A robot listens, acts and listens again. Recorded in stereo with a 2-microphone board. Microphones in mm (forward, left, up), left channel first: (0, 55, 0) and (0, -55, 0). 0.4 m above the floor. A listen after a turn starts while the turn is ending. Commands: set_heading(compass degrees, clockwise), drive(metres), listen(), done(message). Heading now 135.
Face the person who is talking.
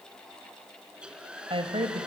set_heading(190)
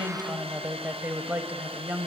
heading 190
set_heading(210)
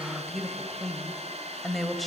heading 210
done("Found it: a woman speaking, straight ahead.")